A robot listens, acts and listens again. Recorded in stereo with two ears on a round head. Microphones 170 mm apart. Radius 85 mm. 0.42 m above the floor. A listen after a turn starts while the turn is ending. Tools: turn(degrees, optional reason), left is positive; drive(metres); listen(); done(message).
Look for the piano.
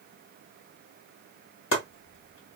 listen()
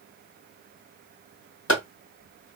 listen()
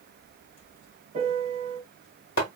turn(degrees=-30, reason="The piano: about 30° right or 150° right.")
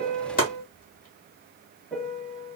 done("Facing the piano, under 1 m away.")